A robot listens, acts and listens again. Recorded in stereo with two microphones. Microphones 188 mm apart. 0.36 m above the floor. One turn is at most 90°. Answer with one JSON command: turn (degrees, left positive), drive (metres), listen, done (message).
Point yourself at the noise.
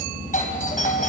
{"turn": 45}
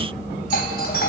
{"turn": 80}
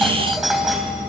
{"done": "Facing the doorbell, 2 to 4 m away."}